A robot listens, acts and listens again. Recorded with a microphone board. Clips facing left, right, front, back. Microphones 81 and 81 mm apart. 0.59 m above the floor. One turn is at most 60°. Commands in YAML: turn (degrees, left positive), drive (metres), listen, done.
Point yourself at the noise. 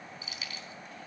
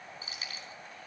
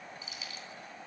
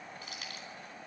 turn: -60
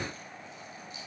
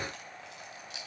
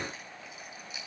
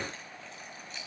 turn: -60
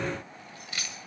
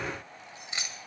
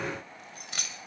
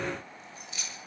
turn: -25
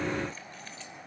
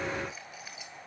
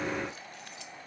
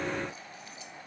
listen: true
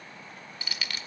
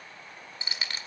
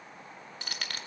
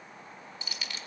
turn: -35
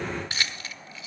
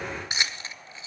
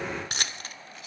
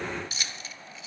turn: -25
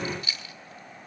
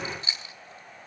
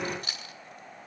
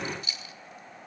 turn: -30
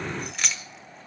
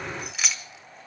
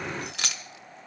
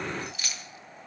done: "Found it: keys jangling, straight ahead, 1 to 2 m away."